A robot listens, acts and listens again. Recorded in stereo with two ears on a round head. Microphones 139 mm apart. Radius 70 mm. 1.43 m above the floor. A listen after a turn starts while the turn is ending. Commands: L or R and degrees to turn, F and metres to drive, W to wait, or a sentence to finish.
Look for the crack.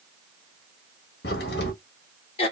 L75
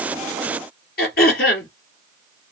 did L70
W
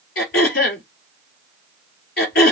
I heard a crack, but can't make it out now. It was about 5° left or 35° left.